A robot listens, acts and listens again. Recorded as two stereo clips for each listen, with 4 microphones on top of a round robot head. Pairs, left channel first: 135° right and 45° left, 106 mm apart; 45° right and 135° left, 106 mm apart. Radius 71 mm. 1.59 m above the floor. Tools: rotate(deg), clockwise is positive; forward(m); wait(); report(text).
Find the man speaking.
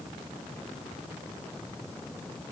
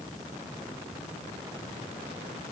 wait()
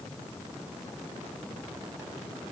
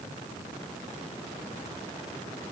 wait()
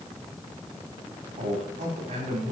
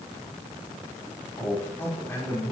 rotate(-25)
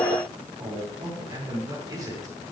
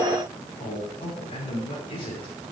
rotate(10)
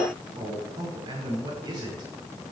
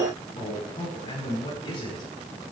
report("Facing the man speaking, over 4 m away.")